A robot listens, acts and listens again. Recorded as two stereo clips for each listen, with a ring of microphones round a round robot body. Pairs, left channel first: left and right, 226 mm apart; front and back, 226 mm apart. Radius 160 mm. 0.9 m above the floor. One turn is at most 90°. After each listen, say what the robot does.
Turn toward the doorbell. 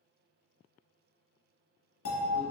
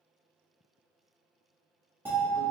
Turn 90° left.
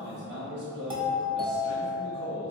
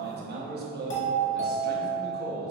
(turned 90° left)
Turn 25° right.
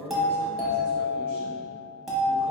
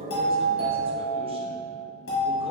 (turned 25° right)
Facing the doorbell.